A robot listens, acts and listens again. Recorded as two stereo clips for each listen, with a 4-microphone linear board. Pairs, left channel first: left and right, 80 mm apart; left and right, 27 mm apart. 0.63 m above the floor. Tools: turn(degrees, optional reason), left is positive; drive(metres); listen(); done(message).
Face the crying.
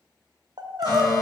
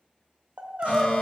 turn(degrees=-65, reason="The crying: about 65° right or 115° right.")
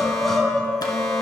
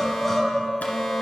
done("Found it: crying, straight ahead.")